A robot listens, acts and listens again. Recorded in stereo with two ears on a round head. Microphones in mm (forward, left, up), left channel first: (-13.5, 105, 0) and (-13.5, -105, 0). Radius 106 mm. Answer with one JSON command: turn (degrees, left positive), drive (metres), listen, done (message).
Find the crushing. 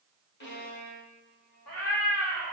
{"listen": true}
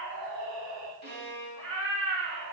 {"listen": true}
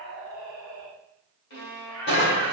{"turn": 45}
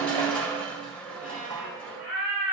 {"done": "Facing the crushing, 1 to 2 m away."}